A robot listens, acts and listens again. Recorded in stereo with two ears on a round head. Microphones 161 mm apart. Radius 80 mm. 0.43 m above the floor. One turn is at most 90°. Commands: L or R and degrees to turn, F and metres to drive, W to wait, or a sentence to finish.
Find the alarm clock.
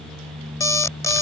L20
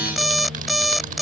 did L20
Facing the alarm clock.